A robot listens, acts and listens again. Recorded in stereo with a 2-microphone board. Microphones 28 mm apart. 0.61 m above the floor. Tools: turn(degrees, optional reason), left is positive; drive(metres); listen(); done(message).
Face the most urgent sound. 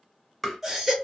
turn(degrees=-30)
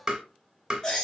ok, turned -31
turn(degrees=25, reason="So it is at 25° left.")
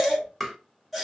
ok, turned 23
done("Facing the baby crying, 1 to 2 m away.")